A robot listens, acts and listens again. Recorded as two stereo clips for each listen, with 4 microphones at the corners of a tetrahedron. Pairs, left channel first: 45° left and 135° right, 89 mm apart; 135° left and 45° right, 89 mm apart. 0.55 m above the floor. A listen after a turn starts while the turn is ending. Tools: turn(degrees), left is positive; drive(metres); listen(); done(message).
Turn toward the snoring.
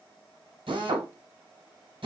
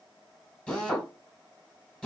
listen()
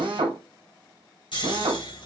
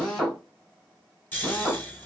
turn(degrees=65)
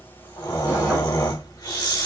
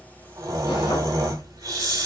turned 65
done("Facing the snoring, 1 to 2 m away.")